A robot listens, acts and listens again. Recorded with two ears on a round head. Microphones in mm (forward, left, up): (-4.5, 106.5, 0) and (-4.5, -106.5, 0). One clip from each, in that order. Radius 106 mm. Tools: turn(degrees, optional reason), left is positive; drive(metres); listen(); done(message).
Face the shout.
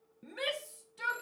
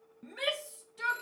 turn(degrees=30)
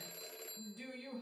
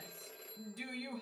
turn(degrees=-25, reason="So it is at 25° right.")
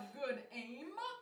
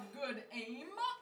turn(degrees=-10, reason="The shout is now 10° right.")
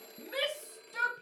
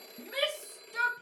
done("Found it: a shout, straight ahead.")